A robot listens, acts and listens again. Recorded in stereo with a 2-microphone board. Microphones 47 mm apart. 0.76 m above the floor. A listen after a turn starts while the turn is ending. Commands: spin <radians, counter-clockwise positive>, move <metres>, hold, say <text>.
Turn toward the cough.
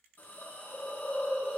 hold
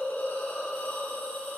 hold
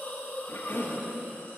spin 0.96
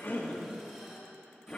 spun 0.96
spin 0.44
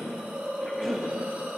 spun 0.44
say Found it: a cough, straight ahead, 1 to 2 m away.